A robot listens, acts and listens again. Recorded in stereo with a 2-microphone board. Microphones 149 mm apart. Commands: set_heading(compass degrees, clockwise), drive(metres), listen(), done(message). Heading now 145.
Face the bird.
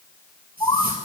set_heading(125)
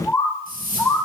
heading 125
done("Found it: a bird, straight ahead, 1 to 2 m away.")